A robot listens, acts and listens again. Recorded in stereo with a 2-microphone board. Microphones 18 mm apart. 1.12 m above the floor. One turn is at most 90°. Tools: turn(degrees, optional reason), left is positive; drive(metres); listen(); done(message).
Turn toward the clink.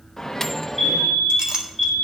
turn(degrees=-45, reason="The clink: about 45° right or 135° right.")
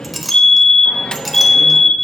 done("Facing the clink, 1 to 2 m away.")